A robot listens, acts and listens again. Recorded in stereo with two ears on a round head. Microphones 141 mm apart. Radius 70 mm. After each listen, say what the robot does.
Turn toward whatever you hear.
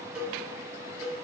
Turn 30° right.
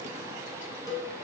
Turn 20° left.
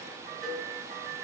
Found it: a cowbell, straight ahead.